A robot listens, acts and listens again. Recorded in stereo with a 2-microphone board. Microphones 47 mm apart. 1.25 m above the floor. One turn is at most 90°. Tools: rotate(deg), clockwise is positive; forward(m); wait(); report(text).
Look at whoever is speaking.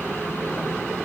wait()
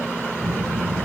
rotate(90)
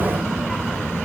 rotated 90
report("Found it: a child speaking, straight ahead.")